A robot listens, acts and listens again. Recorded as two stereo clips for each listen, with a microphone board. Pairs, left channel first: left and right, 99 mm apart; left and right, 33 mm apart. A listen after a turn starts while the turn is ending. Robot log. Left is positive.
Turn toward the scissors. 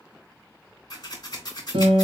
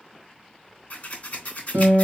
note: The scissors: about 40° left or 140° left.
cmd yaw +40
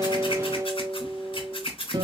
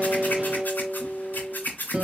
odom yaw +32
note: So it is at 105° left.
cmd yaw +105
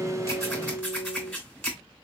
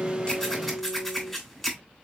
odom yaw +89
note: The scissors is now 15° left.
cmd yaw +15
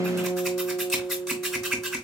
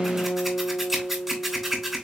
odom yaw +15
end: Facing the scissors, 2 to 4 m away.